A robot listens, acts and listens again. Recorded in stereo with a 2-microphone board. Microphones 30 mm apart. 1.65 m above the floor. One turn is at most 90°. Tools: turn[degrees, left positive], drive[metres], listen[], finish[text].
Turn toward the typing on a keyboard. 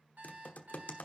Thought: The typing on a keyboard: about 55° left or 125° left.
Action: turn[55]
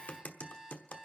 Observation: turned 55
Thought: So it is at 70° left.
Action: turn[70]
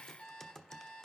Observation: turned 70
Thought: The typing on a keyboard is now 20° left.
Action: turn[20]
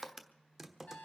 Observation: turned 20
Action: finish[Found it: typing on a keyboard, straight ahead, 1 to 2 m away.]